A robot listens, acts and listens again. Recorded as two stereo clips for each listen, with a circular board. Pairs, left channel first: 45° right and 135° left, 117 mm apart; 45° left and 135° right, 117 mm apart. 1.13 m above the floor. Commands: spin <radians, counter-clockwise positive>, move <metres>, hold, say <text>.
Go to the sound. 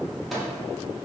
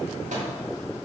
spin -2.36
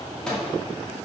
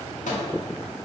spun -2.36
spin 0.70
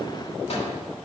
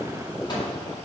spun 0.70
spin -0.17
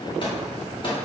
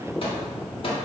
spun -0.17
move 1.0
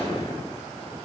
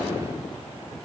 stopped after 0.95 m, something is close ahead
hold
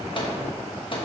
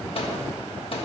say Arrived at the microwave, straight ahead.